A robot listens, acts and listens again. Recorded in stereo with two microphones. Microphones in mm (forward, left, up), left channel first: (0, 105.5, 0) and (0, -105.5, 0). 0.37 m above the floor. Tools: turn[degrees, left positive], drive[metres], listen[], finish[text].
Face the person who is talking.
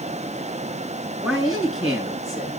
Action: turn[30]
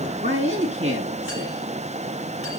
Thought: So it is at 30° right.
Action: turn[-30]
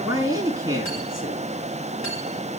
Thought: The man speaking is now 15° right.
Action: turn[-15]
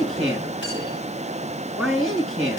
Action: finish[Facing the man speaking, over 4 m away.]